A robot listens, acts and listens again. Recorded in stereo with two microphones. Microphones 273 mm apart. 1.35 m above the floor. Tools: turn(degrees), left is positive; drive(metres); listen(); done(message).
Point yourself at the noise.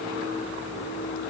listen()
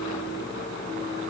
listen()
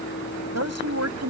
turn(degrees=-70)
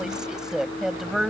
done("Found it: a woman speaking, straight ahead.")